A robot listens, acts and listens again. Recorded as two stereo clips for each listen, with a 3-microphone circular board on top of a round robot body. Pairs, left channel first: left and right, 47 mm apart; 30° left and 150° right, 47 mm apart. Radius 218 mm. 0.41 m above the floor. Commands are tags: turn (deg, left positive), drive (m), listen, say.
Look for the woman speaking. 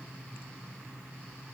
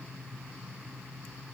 <listen/>
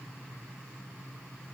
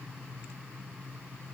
<listen/>
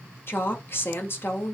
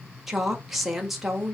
<turn deg="125"/>
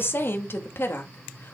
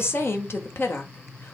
<turn deg="55"/>
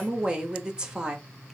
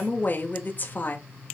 <turn deg="-20"/>
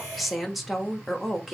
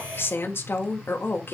<say>Found it: a woman speaking, straight ahead.</say>